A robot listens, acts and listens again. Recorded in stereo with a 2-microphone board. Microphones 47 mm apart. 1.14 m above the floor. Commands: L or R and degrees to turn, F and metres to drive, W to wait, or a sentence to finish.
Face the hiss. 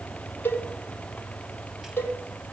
W
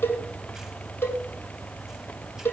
W
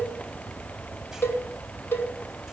I can't make out a hiss, only a cowbell.